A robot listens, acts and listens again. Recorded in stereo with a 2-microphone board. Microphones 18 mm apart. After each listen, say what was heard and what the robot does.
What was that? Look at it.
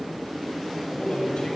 Turn 90° left.
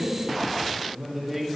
So it is at 10° right. Turn 10° right.
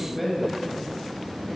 Found it: a man speaking, straight ahead.